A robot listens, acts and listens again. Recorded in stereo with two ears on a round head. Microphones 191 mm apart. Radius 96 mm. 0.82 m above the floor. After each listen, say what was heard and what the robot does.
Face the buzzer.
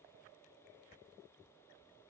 Keep listening.
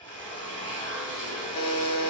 Turn 90° left.
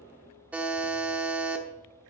Facing the buzzer.